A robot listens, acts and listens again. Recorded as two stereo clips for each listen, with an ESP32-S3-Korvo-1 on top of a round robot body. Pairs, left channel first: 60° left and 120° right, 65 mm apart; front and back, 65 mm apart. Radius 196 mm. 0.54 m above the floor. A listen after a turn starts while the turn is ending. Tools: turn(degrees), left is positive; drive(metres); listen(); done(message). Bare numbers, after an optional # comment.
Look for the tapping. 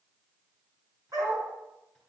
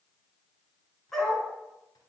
listen()
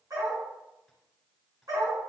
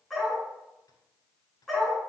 listen()
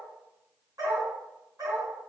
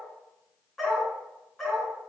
done("I can't make out tapping, only a dog barking.")